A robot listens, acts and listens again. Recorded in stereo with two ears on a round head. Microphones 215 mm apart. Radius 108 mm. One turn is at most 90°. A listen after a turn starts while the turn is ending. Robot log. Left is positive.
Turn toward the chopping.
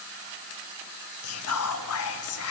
cmd idle
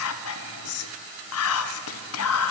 cmd idle
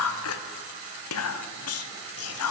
end: I can't make out chopping, only whispering.